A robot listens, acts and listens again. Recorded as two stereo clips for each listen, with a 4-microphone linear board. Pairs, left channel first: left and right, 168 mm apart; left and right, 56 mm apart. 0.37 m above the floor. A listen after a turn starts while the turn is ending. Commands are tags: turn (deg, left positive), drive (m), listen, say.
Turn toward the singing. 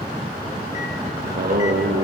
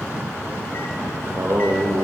<turn deg="-60"/>
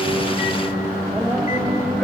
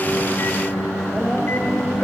<say>Found it: singing, straight ahead, over 4 m away.</say>